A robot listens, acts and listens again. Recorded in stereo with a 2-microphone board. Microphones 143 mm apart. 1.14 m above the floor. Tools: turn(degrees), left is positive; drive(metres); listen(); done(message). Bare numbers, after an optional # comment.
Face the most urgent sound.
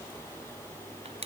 listen()
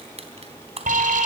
# The alarm: about 70° right or 110° right.
turn(-70)
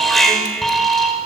done("Found it: an alarm, straight ahead.")